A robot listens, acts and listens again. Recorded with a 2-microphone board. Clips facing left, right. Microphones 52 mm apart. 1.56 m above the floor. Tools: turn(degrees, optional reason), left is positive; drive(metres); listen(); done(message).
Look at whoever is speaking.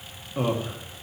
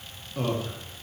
turn(degrees=20, reason="The man speaking: about 20° left or 160° left.")
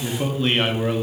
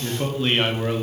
done("Facing the man speaking, 1 to 2 m away.")